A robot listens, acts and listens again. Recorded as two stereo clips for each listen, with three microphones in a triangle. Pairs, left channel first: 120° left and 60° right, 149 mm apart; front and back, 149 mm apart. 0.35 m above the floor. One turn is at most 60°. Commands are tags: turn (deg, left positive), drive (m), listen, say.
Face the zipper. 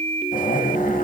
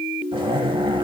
<turn deg="60"/>
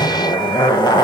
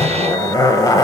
<turn deg="60"/>
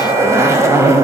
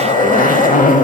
<say>Facing the zipper.</say>